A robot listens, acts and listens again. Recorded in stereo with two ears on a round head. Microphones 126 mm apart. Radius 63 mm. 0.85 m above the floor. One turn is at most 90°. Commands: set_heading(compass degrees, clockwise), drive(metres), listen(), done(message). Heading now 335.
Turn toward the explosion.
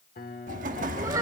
set_heading(35)
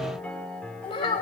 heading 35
listen()
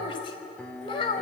done("I heard an explosion, but can't make it out now. It was about straight ahead or 60° right.")